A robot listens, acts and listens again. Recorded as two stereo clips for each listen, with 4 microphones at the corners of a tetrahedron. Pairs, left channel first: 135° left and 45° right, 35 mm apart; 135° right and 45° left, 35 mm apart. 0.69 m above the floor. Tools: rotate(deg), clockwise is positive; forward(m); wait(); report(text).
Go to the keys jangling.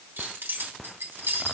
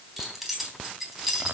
rotate(40)
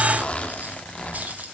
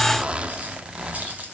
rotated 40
forward(1.0)
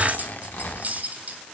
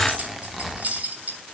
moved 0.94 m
forward(1.0)
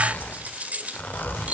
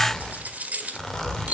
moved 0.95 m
forward(1.0)
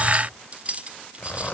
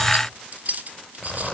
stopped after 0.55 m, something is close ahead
report("Arrived at the keys jangling, straight ahead.")